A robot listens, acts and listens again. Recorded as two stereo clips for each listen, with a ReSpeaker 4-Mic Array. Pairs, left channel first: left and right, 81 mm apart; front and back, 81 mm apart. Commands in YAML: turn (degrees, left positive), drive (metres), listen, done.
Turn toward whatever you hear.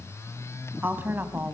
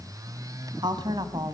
turn: -155
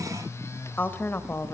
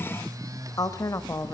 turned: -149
turn: 35
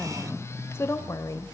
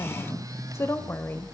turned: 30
turn: 55
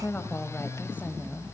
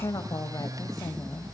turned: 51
turn: 25
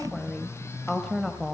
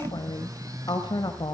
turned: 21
done: "Found it: a woman speaking, straight ahead."